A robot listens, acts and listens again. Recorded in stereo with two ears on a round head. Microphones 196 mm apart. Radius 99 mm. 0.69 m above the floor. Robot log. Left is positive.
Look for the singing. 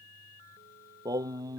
note: The singing: about 15° right or 165° right.
cmd yaw -15
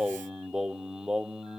end: Found it: singing, straight ahead.